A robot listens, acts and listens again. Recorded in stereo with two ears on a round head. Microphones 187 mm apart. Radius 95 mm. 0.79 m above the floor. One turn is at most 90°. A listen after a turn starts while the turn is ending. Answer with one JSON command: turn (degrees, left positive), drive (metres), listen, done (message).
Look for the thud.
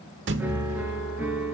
{"turn": -60}
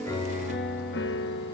{"listen": true}
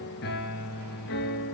{"done": "I heard a thud, but can't make it out now. It was about straight ahead or 60° right."}